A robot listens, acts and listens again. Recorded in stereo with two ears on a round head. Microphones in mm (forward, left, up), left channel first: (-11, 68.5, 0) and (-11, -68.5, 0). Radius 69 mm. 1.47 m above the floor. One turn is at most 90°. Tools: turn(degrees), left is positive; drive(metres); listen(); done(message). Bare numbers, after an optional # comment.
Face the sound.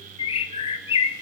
# The bird: about 35° left or 145° left.
turn(35)
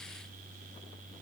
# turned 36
listen()
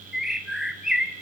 done("Facing the bird.")